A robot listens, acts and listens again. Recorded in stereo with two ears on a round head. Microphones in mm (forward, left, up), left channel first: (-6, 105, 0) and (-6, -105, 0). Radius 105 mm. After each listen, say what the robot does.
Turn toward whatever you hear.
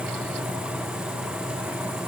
Keep listening.
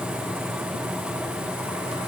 Keep listening.
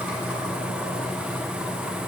I can't make out anything.